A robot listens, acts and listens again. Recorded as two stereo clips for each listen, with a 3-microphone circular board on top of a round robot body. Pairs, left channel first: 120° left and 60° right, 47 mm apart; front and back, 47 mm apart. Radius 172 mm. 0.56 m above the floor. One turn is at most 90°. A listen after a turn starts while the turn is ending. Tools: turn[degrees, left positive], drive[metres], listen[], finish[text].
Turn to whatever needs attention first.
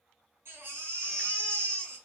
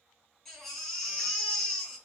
Thought: The baby crying: 85° right.
Action: turn[-85]
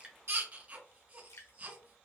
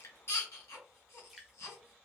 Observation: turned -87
Action: finish[Found it: a baby crying, straight ahead.]